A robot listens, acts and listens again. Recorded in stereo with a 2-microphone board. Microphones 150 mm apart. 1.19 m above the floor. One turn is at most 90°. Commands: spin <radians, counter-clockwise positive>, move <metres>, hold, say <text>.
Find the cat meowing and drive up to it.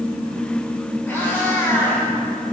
spin 0.52
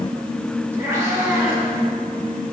spin -0.26
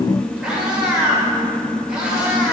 move 1.0
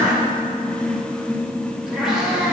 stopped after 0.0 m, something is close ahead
say Something is in my way. I am facing the cat meowing but have not reached it.